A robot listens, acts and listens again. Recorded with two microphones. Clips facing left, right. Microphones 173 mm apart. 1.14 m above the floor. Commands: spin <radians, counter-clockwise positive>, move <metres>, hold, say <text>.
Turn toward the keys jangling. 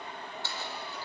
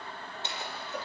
spin -0.35
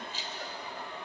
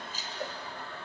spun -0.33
spin -2.36
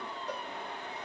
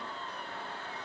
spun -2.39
hold
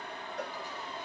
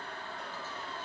hold
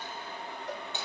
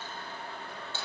spin 0.26
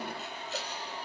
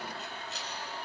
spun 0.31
hold
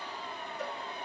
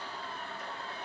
hold
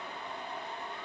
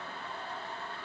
say I heard keys jangling from this way, but can't make it out now.